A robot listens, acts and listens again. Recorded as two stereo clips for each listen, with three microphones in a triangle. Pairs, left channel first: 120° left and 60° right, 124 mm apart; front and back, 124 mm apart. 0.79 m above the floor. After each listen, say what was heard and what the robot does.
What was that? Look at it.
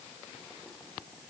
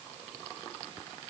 Keep listening.
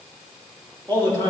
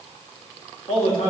Facing the man speaking.